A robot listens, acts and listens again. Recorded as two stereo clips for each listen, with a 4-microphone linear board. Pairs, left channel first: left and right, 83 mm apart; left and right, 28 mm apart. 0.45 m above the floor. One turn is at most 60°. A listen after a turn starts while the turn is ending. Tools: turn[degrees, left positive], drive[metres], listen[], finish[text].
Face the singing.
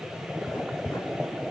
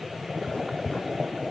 Action: listen[]
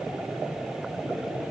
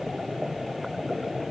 Action: listen[]
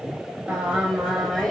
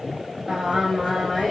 Action: turn[30]
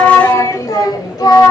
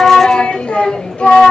Thought: So it is at 125° left.
Action: turn[60]
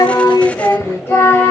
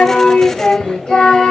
Thought: The singing is now 30° left.
Action: turn[30]
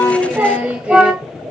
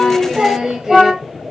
Thought: The singing is now 15° right.
Action: turn[-15]
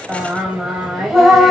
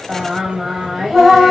Action: finish[Found it: singing, straight ahead.]